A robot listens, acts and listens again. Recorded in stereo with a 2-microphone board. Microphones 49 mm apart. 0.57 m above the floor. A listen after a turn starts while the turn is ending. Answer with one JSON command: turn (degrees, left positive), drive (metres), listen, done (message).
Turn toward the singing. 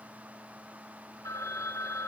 {"listen": true}
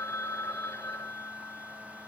{"listen": true}
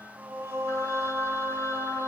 {"turn": -75}
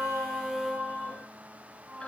{"turn": -20}
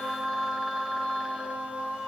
{"done": "Facing the singing."}